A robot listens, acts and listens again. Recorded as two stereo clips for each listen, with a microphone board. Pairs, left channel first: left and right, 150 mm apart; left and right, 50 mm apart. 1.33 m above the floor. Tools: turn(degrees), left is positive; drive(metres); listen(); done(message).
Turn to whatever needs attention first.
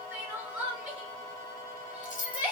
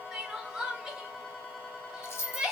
turn(degrees=-30)
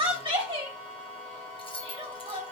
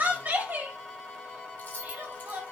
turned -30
turn(degrees=-140)
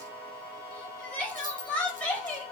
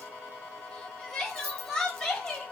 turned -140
turn(degrees=10)
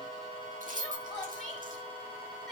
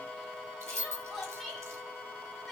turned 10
done("Facing the crying.")